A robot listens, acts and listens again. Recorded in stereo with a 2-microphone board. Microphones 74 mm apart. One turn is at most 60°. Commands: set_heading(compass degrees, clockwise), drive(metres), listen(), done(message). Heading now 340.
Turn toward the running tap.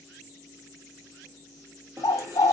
set_heading(25)
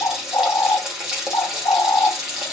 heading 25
set_heading(35)
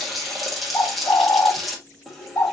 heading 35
done("Facing the running tap.")